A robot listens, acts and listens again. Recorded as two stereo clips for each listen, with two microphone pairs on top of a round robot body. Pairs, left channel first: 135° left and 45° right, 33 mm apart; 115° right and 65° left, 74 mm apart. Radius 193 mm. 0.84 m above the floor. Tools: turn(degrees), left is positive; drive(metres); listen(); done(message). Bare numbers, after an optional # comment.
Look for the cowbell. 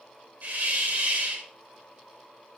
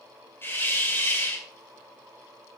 listen()
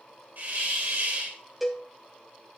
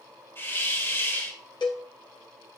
# The cowbell: 135° right.
turn(-135)
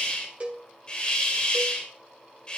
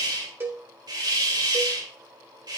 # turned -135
done("Facing the cowbell.")